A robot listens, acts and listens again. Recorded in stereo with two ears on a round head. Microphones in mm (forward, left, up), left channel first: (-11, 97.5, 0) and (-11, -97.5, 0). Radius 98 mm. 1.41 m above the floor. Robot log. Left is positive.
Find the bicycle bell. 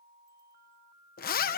cmd idle
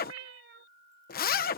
cmd idle
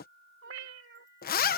end: I can't make out a bicycle bell to turn to.